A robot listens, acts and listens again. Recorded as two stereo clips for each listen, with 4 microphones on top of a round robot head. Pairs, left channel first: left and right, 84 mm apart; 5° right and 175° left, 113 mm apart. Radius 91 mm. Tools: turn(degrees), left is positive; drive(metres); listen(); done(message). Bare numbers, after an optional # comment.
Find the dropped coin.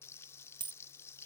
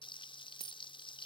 # The dropped coin: 120° right.
turn(-120)
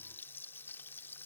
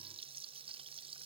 done("Facing where the dropped coin came from. I can't hear it now.")